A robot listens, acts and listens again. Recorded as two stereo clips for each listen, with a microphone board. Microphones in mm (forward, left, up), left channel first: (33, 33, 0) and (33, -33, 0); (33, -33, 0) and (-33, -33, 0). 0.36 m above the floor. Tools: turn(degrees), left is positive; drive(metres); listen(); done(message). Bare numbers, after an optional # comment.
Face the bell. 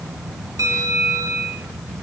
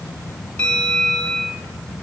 # The bell: 70° right.
turn(-70)
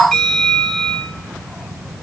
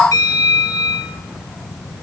# The bell is now 10° left.
turn(10)
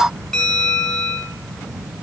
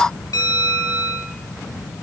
done("Facing the bell, 2 to 4 m away.")